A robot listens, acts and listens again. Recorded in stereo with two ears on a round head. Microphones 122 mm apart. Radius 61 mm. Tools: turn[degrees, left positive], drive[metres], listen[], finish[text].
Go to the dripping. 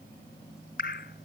Action: turn[90]
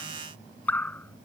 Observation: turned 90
Thought: So it is at 10° left.
Action: turn[10]
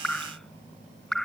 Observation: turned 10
Action: drive[1.0]
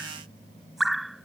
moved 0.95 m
Action: drive[1.0]
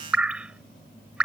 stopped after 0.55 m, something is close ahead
Thought: The dripping is now 10° right.
Action: turn[-10]
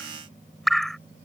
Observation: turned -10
Action: finish[Arrived at the dripping, straight ahead.]